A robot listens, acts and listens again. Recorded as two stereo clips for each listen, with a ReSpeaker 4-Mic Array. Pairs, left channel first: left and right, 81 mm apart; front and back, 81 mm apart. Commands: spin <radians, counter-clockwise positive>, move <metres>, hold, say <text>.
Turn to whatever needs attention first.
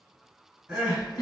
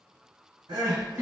spin -2.97
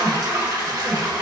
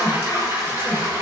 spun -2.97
spin -1.13
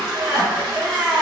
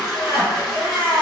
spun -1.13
spin -0.44
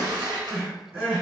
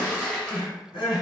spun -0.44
spin -0.17
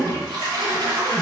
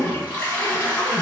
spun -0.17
hold
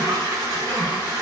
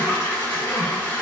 hold
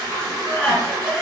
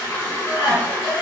say Found it: crying, straight ahead.